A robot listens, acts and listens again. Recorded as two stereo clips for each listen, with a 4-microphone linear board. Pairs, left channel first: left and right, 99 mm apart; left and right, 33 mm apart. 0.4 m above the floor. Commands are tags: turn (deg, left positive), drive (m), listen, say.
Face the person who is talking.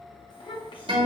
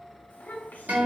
<turn deg="60"/>
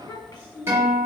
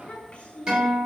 <turn deg="50"/>
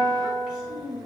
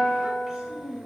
<turn deg="-10"/>
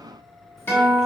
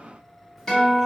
<listen/>
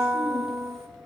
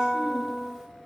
<listen/>
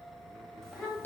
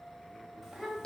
<say>Facing the child speaking.</say>